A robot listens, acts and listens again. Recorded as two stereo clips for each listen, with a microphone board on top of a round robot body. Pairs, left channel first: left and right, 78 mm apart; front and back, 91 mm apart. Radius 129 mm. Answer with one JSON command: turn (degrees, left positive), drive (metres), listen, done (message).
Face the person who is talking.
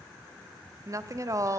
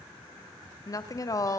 {"turn": -45}
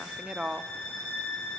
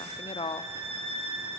{"turn": -15}
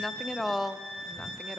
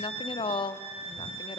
{"done": "Facing the woman speaking."}